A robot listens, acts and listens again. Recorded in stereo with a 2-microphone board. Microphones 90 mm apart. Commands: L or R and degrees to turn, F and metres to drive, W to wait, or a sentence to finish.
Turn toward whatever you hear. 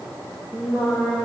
R30
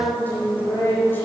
L25
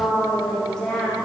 L10
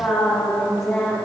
L10
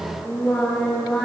Facing the singing.